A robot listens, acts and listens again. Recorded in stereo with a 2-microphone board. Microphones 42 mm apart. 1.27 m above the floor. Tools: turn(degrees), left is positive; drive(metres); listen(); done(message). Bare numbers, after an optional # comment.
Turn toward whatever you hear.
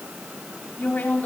# The woman speaking: about 45° left or 135° left.
turn(45)
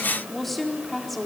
done("Facing the woman speaking.")